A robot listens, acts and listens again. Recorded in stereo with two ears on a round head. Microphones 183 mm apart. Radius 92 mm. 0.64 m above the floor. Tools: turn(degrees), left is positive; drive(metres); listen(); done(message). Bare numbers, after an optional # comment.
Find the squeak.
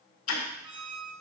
turn(-90)
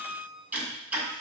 # So it is at 10° left.
turn(10)
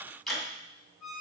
done("Found it: a squeak, straight ahead, 2 to 4 m away.")